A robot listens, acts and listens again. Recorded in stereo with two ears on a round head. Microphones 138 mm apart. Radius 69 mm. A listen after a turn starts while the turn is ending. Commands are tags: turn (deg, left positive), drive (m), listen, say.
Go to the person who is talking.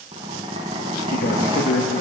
<turn deg="55"/>
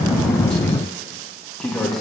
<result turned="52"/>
<drive m="1.0"/>
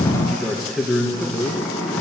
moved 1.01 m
<drive m="1.0"/>
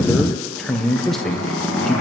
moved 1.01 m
<drive m="1.0"/>
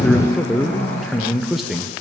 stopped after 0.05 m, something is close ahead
<say>I am next to the man speaking.</say>